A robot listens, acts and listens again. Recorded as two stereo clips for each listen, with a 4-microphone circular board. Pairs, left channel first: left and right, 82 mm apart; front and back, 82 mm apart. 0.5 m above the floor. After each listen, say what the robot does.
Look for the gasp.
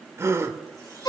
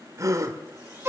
Turn 140° right.
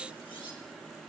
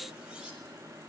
Facing where the gasp came from. I can't hear it now.